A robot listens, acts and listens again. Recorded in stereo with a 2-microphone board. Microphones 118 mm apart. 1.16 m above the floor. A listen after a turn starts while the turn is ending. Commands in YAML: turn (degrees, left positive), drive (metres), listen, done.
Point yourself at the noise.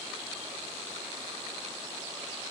listen: true
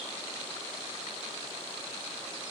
listen: true
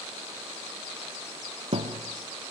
turn: -50
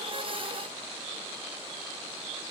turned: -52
listen: true
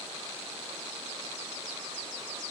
done: "I heard a thud, but can't make it out now. It was about straight ahead or 80° right."